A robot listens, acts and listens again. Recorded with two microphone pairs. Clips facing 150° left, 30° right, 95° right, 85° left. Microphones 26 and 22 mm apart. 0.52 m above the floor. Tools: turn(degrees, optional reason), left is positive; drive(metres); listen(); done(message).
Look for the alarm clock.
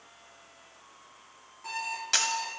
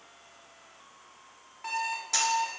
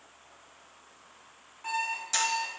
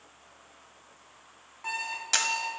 turn(degrees=30, reason="The alarm clock: 30° left.")
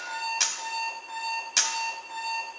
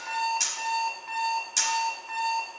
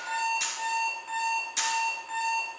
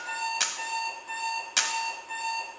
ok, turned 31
done("Found it: an alarm clock, straight ahead, 2 to 4 m away.")